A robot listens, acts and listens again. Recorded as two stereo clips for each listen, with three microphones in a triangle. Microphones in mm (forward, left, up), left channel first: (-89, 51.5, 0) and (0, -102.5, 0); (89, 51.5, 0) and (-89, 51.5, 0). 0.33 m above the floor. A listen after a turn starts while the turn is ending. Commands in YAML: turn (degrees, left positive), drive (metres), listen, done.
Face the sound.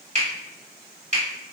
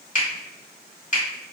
turn: -25
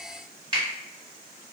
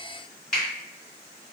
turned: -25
done: "Facing the finger snap."